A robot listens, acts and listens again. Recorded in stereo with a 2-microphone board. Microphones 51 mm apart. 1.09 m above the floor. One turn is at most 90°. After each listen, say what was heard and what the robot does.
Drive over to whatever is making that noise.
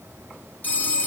The phone ringing: about 35° left or 145° left. Turn 35° left.
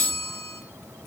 So it is at 110° left. Turn 90° left.
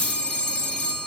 The phone ringing is now 20° left. Turn 20° left.
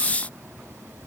Keep listening.
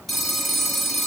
Drive 1.0 m forward.
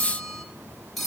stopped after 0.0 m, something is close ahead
Blocked. The phone ringing is further on, straight ahead.